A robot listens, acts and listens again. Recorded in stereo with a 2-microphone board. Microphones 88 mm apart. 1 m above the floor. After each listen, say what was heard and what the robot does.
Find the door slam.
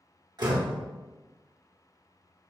The door slam: about 55° right or 125° right. Turn 55° right.
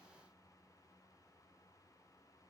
Keep listening.
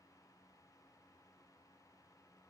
I heard a door slam, but can't make it out now. It was about straight ahead or 70° right.